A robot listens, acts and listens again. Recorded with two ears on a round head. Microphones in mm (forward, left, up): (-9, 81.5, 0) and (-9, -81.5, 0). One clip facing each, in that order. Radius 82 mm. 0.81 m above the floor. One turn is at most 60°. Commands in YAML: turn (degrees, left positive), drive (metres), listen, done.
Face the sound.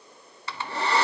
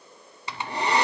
turn: -15
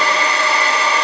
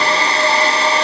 turn: -60
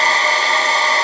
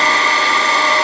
turn: -60
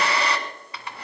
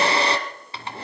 turn: -25
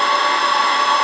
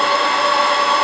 done: "Facing the hair dryer, 1 to 2 m away."